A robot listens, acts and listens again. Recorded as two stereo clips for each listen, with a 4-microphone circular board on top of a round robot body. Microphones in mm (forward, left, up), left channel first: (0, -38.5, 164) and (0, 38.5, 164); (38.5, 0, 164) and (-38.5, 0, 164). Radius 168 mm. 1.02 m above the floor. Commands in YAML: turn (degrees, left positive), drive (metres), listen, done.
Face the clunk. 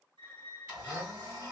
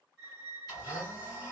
listen: true
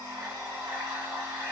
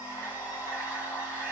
listen: true
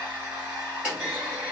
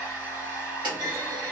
turn: 165
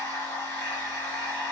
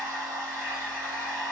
done: "I heard a clunk from this way, but can't make it out now."